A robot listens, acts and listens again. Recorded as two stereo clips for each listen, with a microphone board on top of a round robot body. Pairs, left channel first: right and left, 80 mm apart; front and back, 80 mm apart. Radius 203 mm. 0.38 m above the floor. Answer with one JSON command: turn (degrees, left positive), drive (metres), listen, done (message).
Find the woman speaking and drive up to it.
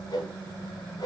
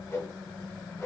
{"listen": true}
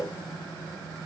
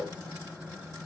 {"listen": true}
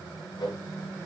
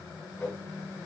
{"done": "I can't make out a woman speaking to turn to."}